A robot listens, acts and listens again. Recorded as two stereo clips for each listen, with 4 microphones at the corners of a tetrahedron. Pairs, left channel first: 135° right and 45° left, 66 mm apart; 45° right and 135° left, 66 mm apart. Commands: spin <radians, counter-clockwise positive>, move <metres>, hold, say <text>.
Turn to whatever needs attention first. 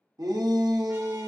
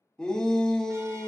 spin 0.52
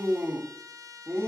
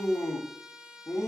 spin -0.17
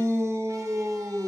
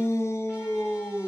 say Facing the shout.